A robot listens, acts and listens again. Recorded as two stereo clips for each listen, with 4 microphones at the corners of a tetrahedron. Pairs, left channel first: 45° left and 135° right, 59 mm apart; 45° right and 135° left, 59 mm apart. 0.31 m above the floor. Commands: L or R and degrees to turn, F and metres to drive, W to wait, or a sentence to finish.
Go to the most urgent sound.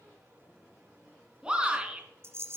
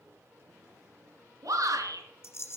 L150
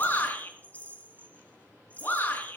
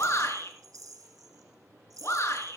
R10
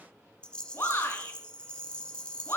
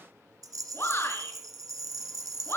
F1.0
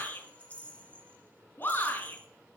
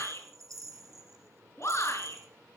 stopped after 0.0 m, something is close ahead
Something is in my way. I am facing the shout but have not reached it.